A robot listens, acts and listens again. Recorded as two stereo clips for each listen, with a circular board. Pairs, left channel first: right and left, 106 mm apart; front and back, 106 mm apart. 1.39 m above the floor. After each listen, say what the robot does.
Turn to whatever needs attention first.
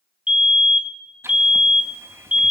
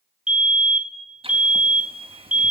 Turn 100° right.
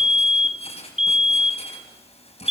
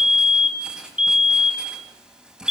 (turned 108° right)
Facing the fire alarm, 1 to 2 m away.